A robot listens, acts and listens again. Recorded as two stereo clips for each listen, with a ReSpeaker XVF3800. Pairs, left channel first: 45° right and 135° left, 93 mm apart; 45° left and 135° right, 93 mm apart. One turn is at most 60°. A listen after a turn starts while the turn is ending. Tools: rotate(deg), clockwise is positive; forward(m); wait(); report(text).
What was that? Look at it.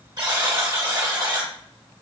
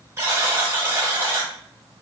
rotate(-60)
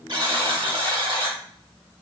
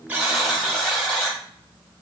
rotate(-60)
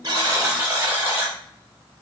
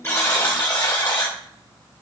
rotate(-60)
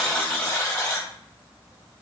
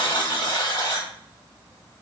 rotate(-10)
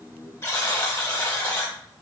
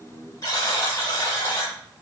report("Found it: a buzzer, straight ahead, 1 to 2 m away.")